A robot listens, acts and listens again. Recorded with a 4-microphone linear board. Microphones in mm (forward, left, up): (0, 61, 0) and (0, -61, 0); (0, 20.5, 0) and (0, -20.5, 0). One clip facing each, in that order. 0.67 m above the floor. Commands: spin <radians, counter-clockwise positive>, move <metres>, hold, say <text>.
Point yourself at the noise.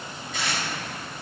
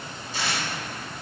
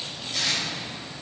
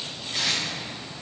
spin -0.61
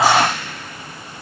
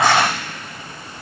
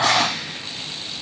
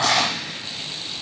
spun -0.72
hold
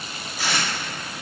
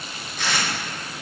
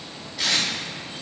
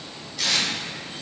say Facing the tape being pulled.